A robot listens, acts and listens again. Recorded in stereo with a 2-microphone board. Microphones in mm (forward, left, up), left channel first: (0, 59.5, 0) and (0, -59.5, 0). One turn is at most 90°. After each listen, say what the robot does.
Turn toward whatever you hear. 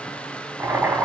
Turn 30° right.
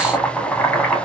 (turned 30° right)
Turn 15° left.
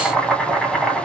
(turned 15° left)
Facing the boiling, 1 to 2 m away.